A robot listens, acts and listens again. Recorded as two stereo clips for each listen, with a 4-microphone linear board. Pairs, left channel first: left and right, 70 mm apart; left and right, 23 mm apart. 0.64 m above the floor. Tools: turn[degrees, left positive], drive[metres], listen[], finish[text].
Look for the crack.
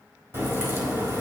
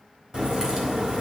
Thought: The crack: about 35° right or 145° right.
Action: turn[-35]
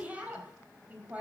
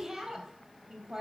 Action: listen[]
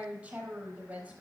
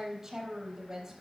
Action: finish[I heard a crack, but can't make it out now. It was about straight ahead or 110° right.]